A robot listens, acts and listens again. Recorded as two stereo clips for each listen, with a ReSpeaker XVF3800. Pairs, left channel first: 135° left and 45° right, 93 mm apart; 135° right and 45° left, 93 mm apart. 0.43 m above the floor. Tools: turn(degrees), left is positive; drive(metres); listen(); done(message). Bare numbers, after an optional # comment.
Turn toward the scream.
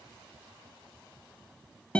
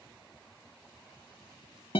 listen()
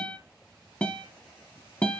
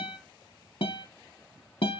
listen()
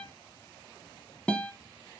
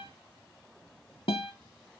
done("I can't make out a scream, only a guitar.")